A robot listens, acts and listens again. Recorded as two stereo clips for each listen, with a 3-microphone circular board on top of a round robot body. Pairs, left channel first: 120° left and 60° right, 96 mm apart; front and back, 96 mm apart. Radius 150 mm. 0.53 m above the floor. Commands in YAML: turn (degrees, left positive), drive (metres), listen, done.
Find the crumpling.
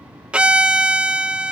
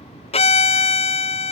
listen: true
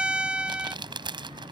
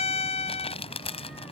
turn: -20
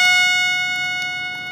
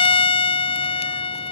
listen: true
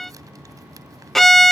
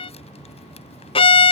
listen: true
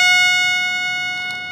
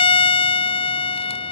done: "Facing where the crumpling came from. I can't hear it now."